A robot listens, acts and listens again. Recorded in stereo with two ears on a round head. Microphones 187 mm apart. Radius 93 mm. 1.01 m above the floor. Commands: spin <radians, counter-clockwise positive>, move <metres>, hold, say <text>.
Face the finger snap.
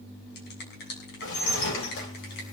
spin 0.96
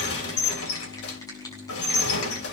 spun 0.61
spin 0.26
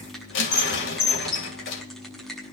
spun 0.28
say Found it: a finger snap, straight ahead.